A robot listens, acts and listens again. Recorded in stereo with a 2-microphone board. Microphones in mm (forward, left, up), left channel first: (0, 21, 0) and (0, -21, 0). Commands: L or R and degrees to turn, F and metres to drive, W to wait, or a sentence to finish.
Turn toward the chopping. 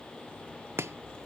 R90
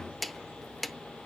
Found it: chopping, straight ahead, under 1 m away.